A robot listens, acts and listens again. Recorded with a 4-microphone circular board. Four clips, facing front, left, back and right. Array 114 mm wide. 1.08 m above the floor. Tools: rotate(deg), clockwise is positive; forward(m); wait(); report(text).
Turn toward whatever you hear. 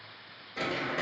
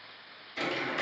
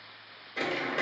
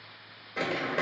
rotate(95)
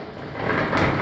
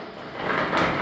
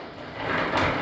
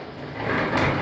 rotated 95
rotate(-30)
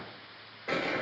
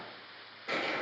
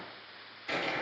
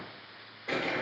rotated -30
report("Facing the crumpling.")